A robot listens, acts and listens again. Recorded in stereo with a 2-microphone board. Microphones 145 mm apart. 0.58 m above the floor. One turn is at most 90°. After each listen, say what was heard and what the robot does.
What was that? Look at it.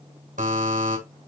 The buzzer: about 65° right or 115° right. Turn 65° right.
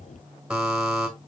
Facing the buzzer, 2 to 4 m away.